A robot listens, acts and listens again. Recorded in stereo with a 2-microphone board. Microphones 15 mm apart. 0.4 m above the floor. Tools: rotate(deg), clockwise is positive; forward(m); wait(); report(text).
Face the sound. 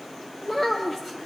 rotate(-30)
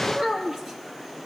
rotate(25)
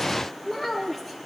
report("Facing the child speaking, over 4 m away.")